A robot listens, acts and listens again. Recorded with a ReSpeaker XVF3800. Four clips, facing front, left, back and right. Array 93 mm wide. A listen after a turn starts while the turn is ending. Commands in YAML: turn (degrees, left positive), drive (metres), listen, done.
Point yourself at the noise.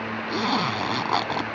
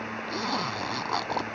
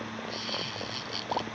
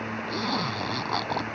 done: "Facing the zipper."